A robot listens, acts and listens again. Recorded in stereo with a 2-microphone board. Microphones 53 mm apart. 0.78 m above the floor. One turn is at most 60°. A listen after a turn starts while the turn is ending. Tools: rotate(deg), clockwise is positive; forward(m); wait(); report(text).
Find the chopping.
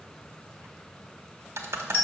wait()
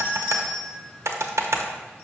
wait()
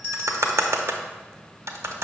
report("I can't make out chopping to turn to.")